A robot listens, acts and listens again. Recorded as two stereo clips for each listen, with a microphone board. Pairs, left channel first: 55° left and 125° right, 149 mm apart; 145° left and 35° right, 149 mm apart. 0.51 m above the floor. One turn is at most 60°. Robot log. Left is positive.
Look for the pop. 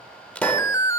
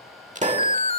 note: The pop: 25° right.
cmd yaw -25
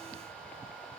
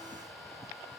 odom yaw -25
end: Facing where the pop came from. I can't hear it now.